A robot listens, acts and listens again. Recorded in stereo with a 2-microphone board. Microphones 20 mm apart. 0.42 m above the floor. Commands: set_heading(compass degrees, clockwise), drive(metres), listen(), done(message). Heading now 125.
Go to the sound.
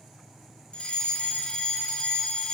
set_heading(65)
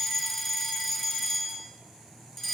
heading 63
set_heading(48)
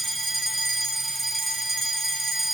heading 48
drive(1.0)
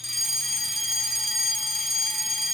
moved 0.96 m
drive(1.0)
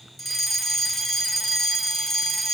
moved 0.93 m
set_heading(33)
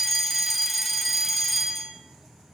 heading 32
drive(1.0)
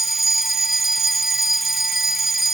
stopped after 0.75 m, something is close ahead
done("Arrived at the fire alarm, straight ahead.")